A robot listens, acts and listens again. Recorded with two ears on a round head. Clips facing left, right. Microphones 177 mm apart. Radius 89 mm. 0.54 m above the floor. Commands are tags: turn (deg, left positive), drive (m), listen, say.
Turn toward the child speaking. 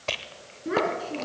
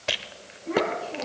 <turn deg="90"/>
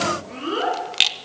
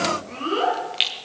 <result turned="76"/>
<turn deg="10"/>
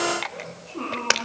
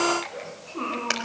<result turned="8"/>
<say>Facing the child speaking.</say>